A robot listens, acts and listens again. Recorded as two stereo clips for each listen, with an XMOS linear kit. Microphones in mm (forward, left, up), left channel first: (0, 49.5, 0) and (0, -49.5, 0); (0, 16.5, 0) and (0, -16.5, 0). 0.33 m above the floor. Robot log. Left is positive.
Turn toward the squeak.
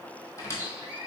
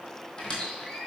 note: The squeak: about 30° left or 150° left.
cmd yaw +30
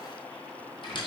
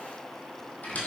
note: So it is at 120° left.
cmd yaw +120
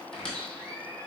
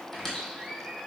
note: The squeak is now 10° left.
cmd yaw +10
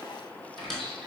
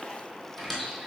end: Facing the squeak, 1 to 2 m away.